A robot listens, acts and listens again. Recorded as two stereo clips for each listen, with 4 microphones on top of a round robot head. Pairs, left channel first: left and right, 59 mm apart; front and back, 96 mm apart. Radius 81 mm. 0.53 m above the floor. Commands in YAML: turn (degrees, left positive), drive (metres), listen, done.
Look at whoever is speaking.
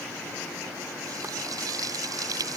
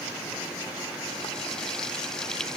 listen: true
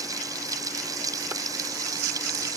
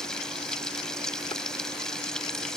listen: true
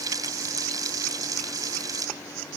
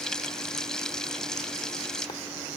done: "I can't make out anyone speaking to turn to."